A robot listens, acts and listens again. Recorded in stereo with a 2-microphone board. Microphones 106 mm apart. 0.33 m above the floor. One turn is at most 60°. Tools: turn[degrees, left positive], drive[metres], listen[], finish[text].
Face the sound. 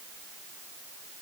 Action: listen[]
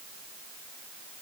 Action: listen[]
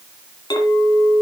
Thought: The clink: about 50° left or 130° left.
Action: turn[50]
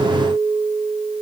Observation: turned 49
Thought: So it is at 80° left.
Action: turn[60]
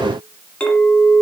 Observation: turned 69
Thought: The clink is now 10° left.
Action: turn[10]
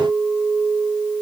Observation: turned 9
Action: finish[Found it: a clink, straight ahead, 2 to 4 m away.]